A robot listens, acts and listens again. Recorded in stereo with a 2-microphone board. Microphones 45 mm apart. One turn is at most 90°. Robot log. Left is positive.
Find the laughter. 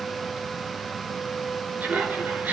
note: The laughter: about 45° right or 135° right.
cmd yaw -45
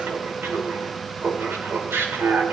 note: So it is at 90° right.
cmd yaw -90
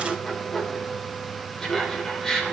note: The laughter is now 15° left.
cmd yaw +15
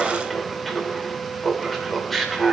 end: Found it: laughter, straight ahead.